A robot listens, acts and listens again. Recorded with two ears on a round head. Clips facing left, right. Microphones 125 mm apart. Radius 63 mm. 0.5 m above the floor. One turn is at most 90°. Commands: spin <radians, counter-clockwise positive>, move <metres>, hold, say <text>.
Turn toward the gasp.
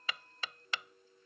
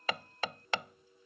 hold
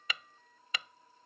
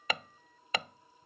hold
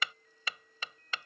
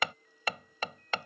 say I can't make out a gasp to turn to.